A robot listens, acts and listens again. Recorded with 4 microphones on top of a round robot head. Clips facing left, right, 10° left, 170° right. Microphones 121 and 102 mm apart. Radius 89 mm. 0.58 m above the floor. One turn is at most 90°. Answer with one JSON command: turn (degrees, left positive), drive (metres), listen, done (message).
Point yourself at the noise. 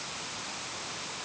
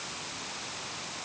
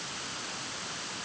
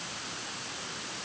{"listen": true}
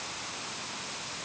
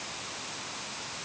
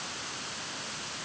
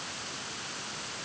{"listen": true}
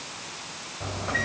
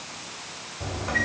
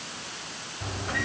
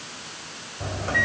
{"turn": -90}
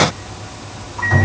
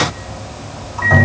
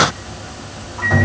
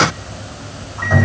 {"turn": -75}
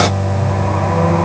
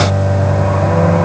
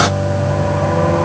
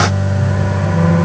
{"turn": -20}
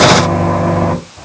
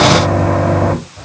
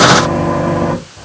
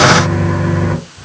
{"done": "Facing the microwave."}